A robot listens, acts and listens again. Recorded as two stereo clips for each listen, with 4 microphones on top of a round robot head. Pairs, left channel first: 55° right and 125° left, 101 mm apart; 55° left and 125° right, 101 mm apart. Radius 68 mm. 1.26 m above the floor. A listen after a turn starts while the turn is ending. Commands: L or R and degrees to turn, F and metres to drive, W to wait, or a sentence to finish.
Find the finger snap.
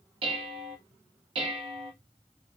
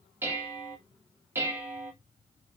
W
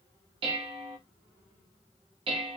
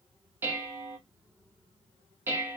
W
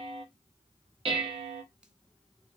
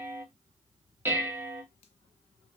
I can't make out a finger snap to turn to.